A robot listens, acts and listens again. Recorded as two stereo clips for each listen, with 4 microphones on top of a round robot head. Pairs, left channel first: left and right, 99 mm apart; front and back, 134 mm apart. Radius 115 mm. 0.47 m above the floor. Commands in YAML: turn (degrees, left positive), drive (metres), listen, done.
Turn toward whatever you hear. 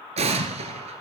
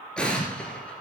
turn: -85
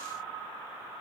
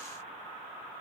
done: "Facing where the explosion came from. I can't hear it now."